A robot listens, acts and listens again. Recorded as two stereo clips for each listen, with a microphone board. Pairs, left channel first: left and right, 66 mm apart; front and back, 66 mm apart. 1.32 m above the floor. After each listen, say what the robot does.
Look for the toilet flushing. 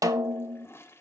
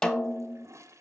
Turn 140° left.
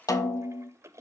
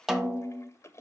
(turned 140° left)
Turn 45° right.
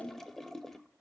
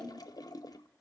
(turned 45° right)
Facing the toilet flushing.